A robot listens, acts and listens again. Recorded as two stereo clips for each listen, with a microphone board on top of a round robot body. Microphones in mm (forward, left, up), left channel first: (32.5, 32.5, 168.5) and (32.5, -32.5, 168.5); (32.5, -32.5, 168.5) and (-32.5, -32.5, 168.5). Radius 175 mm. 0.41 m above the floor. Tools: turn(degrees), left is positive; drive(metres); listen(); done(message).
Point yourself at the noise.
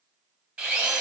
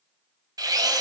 turn(degrees=-160)
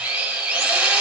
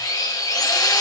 turn(degrees=-15)
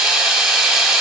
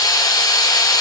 done("Found it: a drill, straight ahead.")